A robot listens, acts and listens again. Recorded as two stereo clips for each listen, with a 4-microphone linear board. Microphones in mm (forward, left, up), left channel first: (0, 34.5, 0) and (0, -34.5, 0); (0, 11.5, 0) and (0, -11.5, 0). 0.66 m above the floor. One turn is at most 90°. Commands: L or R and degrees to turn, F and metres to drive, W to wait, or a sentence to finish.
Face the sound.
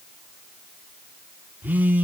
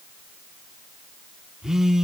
R25
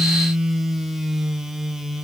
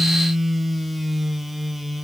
Found it: a phone buzzing, straight ahead.